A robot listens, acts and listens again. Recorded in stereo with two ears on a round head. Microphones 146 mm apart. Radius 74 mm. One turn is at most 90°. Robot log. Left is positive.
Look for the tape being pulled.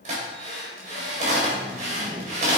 note: The tape being pulled: about 45° right or 135° right.
cmd yaw -45
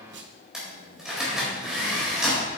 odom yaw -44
note: So it is at 95° right.
cmd yaw -90
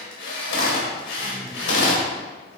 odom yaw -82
note: The tape being pulled is now 15° right.
cmd yaw -15
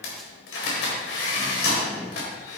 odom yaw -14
end: Found it: tape being pulled, straight ahead.